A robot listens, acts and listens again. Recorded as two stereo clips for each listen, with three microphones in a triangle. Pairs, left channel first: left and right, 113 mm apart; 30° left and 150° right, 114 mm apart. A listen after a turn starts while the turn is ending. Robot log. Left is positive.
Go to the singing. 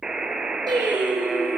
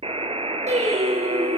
note: The singing: 140° right.
cmd yaw -140
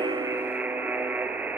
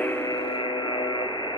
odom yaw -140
cmd idle
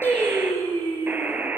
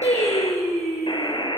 note: The singing is now 20° left.
cmd yaw +20
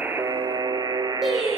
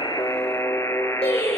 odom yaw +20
cmd fwd 1.0
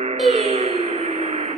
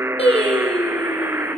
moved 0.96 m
cmd fwd 1.0
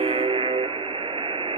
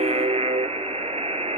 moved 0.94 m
cmd idle
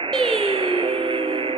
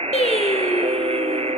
cmd fwd 1.0
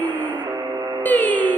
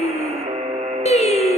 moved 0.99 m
note: The singing is now 15° left.
cmd yaw +15
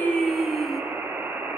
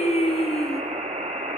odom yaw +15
cmd fwd 1.0
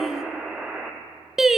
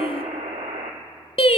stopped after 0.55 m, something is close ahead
end: I am next to the singing.